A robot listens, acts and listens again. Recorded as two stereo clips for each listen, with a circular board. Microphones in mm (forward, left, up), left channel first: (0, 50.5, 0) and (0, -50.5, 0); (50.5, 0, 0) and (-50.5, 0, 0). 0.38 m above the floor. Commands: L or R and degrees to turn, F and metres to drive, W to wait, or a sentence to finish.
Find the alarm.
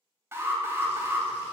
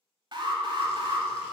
R150
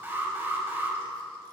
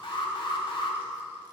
R20
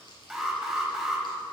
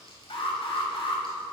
Found it: an alarm, straight ahead.